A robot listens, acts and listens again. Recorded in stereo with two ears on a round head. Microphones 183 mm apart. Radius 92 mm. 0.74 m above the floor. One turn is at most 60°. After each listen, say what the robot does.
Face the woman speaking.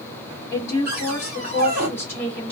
Turn 30° left.
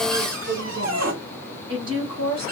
Turn 30° right.
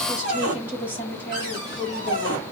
Turn 10° right.
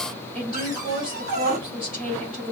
Found it: a woman speaking, straight ahead.